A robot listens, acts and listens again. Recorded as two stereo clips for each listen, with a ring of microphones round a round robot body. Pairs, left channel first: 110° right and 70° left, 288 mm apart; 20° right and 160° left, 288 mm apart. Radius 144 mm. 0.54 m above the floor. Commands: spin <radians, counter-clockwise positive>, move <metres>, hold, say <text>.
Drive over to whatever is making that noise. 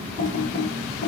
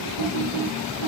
spin -0.61
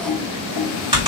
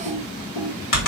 move 1.0
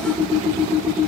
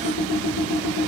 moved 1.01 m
spin -0.17
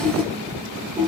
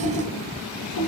move 1.0
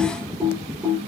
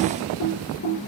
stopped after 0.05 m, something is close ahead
spin -0.26
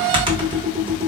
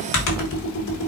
say I am next to the typing on a keyboard.